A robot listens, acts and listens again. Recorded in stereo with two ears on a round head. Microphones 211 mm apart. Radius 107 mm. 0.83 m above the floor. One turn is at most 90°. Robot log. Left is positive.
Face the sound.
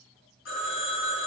note: The phone ringing: about 55° left or 125° left.
cmd yaw +55
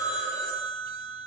note: So it is at 10° left.
cmd yaw +10
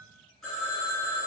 end: Found it: a phone ringing, straight ahead, 1 to 2 m away.